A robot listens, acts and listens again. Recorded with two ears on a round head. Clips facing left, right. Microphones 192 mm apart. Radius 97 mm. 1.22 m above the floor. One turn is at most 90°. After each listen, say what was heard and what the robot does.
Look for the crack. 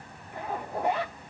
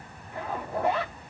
Keep listening.
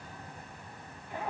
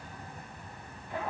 Keep listening.
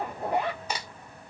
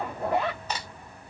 Turn 30° left.
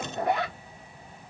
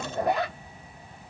Keep listening.
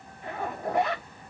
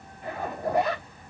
I heard a crack, but can't make it out now. It was about 20° right or 140° left.